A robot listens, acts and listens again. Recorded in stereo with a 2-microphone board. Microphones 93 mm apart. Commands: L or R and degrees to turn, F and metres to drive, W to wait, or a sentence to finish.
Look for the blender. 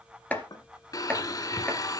L40
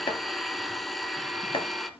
Facing the blender, under 1 m away.